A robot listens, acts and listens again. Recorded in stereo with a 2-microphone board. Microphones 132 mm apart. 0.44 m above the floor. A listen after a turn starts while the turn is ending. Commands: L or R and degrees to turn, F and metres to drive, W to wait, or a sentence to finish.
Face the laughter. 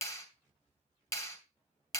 W
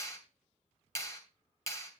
W
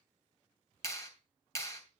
I can't make out laughter, only a clap.